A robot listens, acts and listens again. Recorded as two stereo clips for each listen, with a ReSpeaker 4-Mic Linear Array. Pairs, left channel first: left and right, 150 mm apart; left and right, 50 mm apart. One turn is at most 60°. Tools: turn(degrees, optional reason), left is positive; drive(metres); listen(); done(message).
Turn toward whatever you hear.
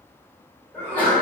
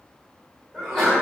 turn(degrees=30)
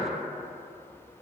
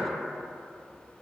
listen()
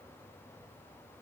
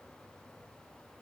done("I heard a sneeze, but can't make it out now. It was about 20° right or 140° left.")